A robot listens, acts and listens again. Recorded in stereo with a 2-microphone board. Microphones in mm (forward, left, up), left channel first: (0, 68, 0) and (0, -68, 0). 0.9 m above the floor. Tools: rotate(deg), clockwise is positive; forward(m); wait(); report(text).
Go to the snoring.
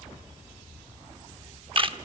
wait()
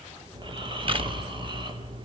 rotate(35)
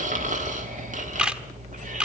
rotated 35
rotate(105)
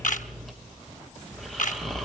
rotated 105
forward(1.0)
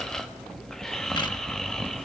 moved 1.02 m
forward(1.0)
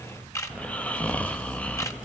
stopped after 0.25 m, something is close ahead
rotate(-10)
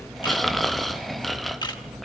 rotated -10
report("I am next to the snoring.")